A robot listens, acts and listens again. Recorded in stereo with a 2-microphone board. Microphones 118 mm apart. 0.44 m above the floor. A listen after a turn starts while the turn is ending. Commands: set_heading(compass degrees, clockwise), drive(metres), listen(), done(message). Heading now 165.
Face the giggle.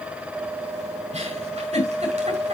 set_heading(235)
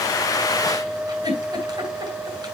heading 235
set_heading(270)
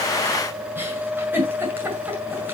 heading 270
set_heading(290)
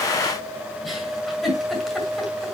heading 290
done("Found it: a giggle, straight ahead, over 4 m away.")